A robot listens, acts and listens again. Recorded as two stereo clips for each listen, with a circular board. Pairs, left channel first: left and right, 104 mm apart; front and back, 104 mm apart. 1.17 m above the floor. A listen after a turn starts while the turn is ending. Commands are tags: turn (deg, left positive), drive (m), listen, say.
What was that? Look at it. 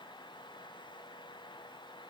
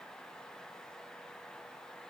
<listen/>
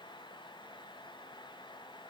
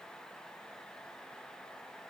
<listen/>
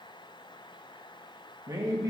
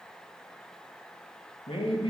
<turn deg="-35"/>
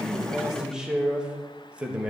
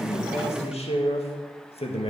<turn deg="-10"/>
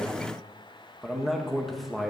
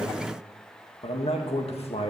<say>Found it: a man speaking, straight ahead.</say>